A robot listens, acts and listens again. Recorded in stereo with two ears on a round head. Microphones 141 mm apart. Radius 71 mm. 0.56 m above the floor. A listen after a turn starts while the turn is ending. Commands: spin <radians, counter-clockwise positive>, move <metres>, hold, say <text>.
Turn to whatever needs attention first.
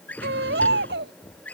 spin -1.22
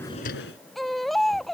say Found it: a baby crying, straight ahead.